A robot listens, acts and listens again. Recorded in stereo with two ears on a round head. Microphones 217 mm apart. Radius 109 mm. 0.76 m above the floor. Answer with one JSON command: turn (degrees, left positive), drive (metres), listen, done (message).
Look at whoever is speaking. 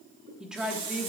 {"turn": -30}
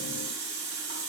{"listen": true}
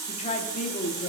{"turn": 30}
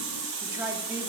{"turn": -10}
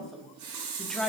{"done": "Found it: a woman speaking, straight ahead."}